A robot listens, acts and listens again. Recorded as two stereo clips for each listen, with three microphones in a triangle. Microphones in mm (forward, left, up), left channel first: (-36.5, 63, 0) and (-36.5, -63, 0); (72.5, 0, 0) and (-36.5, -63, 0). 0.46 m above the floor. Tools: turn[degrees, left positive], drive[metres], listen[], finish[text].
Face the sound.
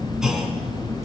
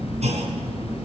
Thought: The clunk: 175° right.
Action: turn[-175]
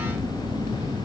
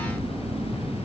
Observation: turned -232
Thought: Nothing new. It was at 55° left.
Action: turn[55]
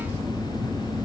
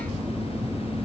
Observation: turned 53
Action: finish[Facing where the clunk came from. I can't hear it now.]